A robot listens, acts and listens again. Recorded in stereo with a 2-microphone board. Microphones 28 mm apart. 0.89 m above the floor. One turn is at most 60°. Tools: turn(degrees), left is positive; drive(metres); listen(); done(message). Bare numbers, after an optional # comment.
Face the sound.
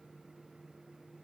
listen()
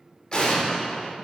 # The explosion: about 35° left or 145° left.
turn(35)
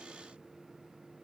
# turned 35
listen()
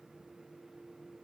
done("I heard an explosion, but can't make it out now. It was about straight ahead or 110° left.")